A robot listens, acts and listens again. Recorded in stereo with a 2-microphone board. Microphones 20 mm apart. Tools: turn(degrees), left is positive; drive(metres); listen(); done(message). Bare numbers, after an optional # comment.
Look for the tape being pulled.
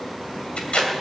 turn(90)
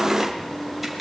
done("Facing the tape being pulled, 2 to 4 m away.")